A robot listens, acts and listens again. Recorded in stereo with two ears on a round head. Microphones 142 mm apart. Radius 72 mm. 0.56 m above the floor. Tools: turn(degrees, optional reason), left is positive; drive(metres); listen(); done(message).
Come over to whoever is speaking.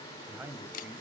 turn(degrees=-30)
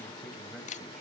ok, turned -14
listen()
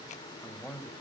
drive(metres=1.0)
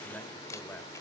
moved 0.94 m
turn(degrees=10, reason="The man speaking is now 10° left.")
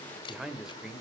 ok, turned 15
drive(metres=1.0)
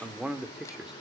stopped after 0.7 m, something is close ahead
done("I am next to the man speaking.")